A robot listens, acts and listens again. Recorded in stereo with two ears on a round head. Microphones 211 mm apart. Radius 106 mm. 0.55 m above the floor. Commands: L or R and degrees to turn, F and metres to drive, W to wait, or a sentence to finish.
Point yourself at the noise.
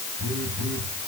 R45
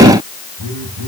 R90
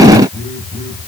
Found it: a phone buzzing, straight ahead.